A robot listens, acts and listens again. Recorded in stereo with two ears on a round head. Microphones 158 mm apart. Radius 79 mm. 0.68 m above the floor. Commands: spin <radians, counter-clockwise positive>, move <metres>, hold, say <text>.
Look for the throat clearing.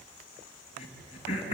spin 0.61
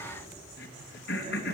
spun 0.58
spin 2.01
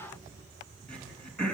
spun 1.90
say Facing the throat clearing.